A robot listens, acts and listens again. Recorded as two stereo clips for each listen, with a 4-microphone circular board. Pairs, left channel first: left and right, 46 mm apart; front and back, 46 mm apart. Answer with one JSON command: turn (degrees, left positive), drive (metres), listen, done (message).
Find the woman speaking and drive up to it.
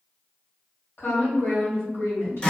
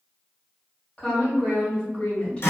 {"turn": 70}
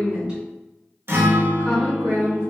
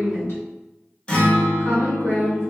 {"turn": -20}
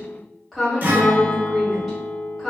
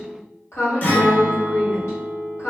{"drive": 1.0}
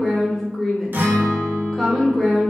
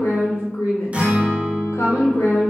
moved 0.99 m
{"drive": 1.0}
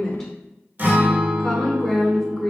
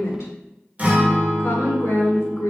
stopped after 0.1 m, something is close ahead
{"turn": 10}
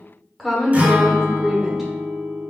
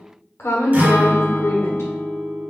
{"done": "I am next to the woman speaking."}